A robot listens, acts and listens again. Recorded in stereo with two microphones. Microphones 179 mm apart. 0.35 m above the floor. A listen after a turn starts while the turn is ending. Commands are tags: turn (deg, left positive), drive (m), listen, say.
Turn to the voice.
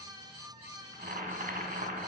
<listen/>
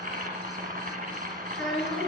<turn deg="30"/>
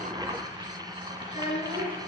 <turn deg="145"/>
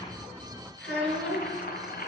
<say>Facing the child speaking.</say>